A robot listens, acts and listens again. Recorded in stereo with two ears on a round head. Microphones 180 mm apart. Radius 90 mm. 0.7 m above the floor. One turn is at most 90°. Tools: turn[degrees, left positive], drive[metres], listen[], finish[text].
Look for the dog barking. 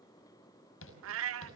Action: listen[]
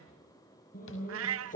Thought: The dog barking: about 40° left or 140° left.
Action: turn[40]
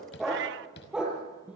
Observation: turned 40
Action: finish[Facing the dog barking, over 4 m away.]